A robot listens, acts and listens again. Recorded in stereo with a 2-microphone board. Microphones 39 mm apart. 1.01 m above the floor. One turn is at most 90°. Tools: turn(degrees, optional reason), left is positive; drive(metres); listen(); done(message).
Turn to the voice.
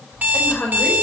turn(degrees=40, reason="The woman speaking: about 40° left or 140° left.")
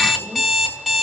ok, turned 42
listen()
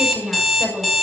done("Facing the woman speaking.")